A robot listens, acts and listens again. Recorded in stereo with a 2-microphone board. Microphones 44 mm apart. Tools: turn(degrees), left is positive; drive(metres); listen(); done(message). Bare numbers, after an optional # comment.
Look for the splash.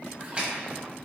# The splash: about 25° right or 155° right.
turn(-25)
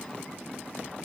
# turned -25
listen()
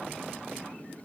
done("I heard a splash, but can't make it out now. It was about straight ahead or 130° right.")